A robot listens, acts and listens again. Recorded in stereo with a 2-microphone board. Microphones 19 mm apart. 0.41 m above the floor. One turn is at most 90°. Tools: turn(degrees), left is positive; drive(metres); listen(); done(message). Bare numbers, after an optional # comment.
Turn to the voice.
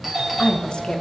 # The woman speaking: about 45° left or 135° left.
turn(45)
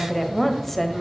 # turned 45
# So it is at 10° left.
turn(10)
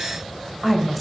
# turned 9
done("Facing the woman speaking.")